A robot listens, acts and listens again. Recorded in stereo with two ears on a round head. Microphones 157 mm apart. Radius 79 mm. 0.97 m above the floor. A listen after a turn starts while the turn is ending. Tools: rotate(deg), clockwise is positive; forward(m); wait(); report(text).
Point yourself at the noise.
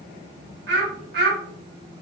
rotate(55)
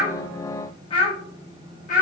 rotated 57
rotate(-45)
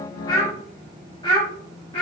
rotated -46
rotate(-30)
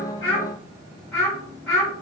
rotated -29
report("Found it: a child speaking, straight ahead, 1 to 2 m away.")